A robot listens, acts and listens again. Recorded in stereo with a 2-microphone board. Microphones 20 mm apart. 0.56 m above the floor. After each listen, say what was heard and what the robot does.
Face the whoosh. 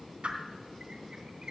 The whoosh: about 75° right or 105° right. Turn 75° right.
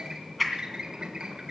Facing the whoosh.